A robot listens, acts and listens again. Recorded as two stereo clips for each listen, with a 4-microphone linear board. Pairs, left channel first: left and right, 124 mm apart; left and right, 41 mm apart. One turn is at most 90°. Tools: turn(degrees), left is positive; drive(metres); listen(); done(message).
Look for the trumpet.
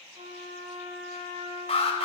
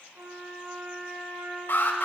turn(degrees=-70)
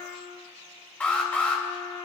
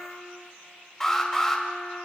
turn(degrees=-15)
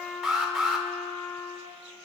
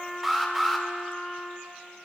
done("Facing the trumpet, 2 to 4 m away.")